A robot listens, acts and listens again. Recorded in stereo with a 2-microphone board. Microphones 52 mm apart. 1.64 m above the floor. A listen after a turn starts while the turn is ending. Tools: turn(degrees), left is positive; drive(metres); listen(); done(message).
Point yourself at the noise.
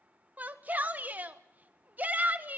turn(degrees=-35)
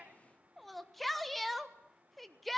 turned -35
done("Found it: a shout, straight ahead, 1 to 2 m away.")